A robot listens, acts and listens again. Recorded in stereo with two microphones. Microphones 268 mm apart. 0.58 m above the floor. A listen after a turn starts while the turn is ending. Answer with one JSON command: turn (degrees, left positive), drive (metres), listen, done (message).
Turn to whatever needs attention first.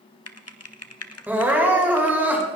{"turn": -30}
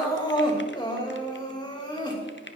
{"turn": 20}
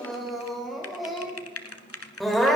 {"done": "Facing the crying, 2 to 4 m away."}